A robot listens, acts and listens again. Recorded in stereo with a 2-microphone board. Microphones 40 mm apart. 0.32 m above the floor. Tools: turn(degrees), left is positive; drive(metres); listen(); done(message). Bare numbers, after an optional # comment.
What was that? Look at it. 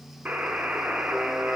# The buzzer: about 50° right or 130° right.
turn(-50)
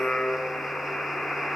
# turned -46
done("Facing the buzzer.")